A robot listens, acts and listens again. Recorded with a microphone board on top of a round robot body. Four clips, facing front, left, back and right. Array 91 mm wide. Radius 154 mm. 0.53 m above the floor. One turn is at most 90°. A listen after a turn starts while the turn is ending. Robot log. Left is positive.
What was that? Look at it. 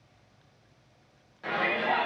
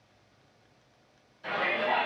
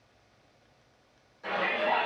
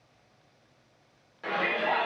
note: The shout: 65° right.
cmd yaw -65
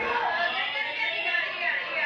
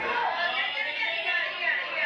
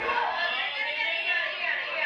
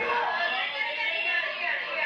note: The shout is now 10° left.
cmd yaw +10
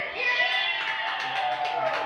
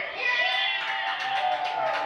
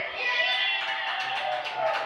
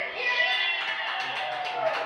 end: Facing the shout.